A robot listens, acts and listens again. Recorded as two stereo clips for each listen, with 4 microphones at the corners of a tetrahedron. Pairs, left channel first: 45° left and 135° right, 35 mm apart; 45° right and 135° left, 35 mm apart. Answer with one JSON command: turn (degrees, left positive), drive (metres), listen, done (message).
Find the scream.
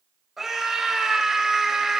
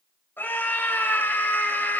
{"turn": -50}
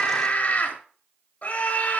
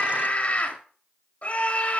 {"done": "Facing the scream, 2 to 4 m away."}